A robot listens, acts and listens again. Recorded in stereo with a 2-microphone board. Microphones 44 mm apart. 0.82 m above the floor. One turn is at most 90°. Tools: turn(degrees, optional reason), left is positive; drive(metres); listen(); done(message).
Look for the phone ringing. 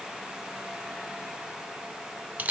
listen()
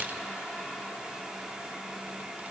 listen()
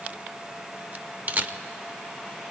done("I can't make out a phone ringing, only a camera shutter.")